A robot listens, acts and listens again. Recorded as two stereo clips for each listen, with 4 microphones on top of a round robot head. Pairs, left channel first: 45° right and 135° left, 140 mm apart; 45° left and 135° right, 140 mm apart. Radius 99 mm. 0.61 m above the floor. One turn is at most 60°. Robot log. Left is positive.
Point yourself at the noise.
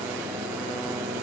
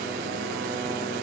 cmd idle
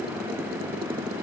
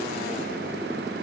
cmd idle
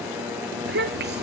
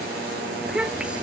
note: The child speaking: 140° left.
cmd yaw +60
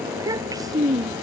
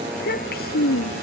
note: The child speaking is now 65° left.
cmd yaw +60
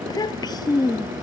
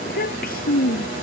note: The child speaking is now 20° left.
cmd yaw +20
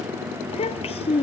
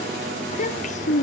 end: Found it: a child speaking, straight ahead.